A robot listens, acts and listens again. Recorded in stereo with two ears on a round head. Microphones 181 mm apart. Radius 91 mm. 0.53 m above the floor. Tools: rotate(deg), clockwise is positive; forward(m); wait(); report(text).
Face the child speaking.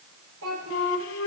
rotate(90)
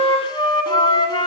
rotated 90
wait()
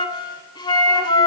wait()
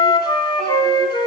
report("I heard a child speaking from this way, but can't make it out now.")